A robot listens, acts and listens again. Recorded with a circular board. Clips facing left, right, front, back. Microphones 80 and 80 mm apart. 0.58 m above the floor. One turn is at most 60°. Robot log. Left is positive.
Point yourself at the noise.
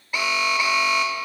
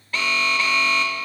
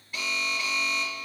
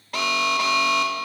note: The alarm: 165° left.
cmd yaw +60
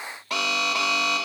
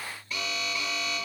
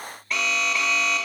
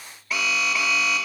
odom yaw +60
note: The alarm is now 95° left.
cmd yaw +60
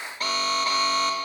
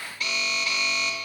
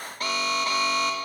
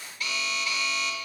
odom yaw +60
note: The alarm is now 40° left.
cmd yaw +40
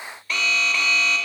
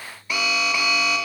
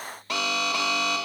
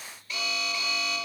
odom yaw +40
note: The alarm is now 10° right.
cmd yaw -10
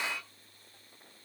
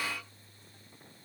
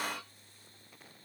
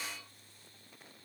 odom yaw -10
cmd idle
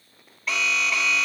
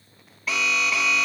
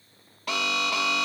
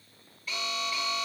end: Found it: an alarm, straight ahead.